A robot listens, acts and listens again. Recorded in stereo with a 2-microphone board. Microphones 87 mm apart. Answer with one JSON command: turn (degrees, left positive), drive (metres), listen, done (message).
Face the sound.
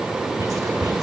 {"turn": -45}
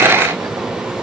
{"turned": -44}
{"listen": true}
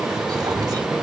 {"turn": -75}
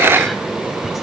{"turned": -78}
{"listen": true}
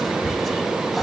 {"done": "Found it: whispering, straight ahead, 2 to 4 m away."}